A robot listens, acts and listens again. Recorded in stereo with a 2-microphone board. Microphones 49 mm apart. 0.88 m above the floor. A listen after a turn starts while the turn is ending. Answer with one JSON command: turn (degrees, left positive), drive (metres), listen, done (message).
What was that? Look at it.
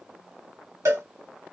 {"turn": -75}
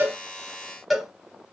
{"done": "Found it: a cowbell, straight ahead."}